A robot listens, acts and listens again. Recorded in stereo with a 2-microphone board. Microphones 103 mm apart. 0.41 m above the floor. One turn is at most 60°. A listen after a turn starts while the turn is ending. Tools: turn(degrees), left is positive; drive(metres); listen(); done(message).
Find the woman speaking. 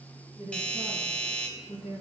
turn(degrees=60)
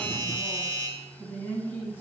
turn(degrees=20)
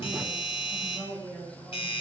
turn(degrees=10)
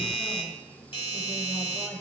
listen()
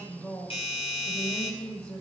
turn(degrees=10)
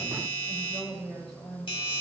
done("Facing the woman speaking.")